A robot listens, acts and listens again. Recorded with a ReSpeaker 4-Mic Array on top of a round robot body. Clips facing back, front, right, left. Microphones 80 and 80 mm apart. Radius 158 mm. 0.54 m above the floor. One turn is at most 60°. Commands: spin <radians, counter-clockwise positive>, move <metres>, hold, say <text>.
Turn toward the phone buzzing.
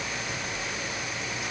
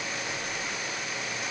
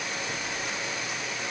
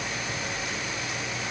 spin -1.05
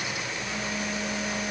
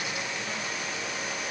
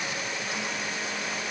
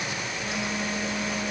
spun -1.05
spin -0.26
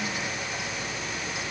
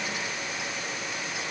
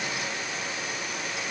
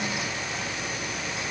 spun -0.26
hold
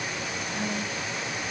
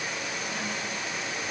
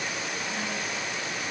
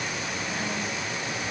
say Facing the phone buzzing.